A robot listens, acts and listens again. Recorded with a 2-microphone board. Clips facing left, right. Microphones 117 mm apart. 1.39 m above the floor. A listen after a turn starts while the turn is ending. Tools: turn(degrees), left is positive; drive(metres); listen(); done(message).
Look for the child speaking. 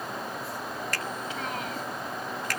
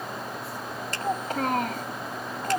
turn(degrees=-50)
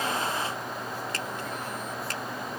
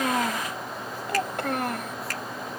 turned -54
turn(degrees=-70)
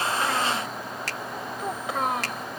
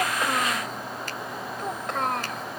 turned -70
done("Facing the child speaking.")